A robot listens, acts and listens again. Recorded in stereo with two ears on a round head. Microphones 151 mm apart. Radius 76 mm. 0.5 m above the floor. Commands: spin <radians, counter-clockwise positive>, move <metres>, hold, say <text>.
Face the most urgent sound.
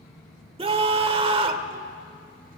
spin -0.61
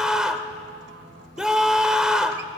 say Facing the scream.